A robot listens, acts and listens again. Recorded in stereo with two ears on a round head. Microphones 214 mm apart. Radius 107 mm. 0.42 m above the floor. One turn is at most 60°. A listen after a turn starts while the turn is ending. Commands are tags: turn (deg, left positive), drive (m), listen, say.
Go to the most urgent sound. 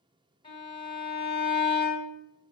<listen/>
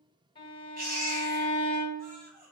<turn deg="-40"/>
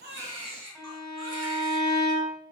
<turn deg="-60"/>
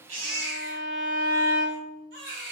<turn deg="-50"/>
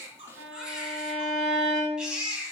<drive m="1.0"/>
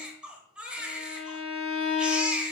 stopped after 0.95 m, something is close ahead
<say>I am next to the baby crying.</say>